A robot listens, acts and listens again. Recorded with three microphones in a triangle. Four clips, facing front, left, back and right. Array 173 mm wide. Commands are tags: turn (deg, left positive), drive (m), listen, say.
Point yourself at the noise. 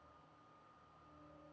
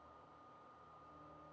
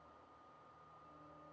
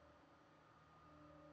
<listen/>
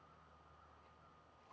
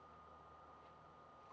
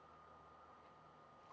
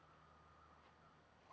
<listen/>
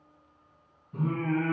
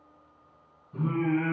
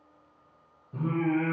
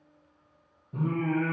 <turn deg="-125"/>
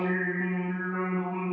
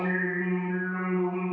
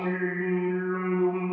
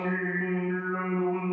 <say>Facing the singing, 2 to 4 m away.</say>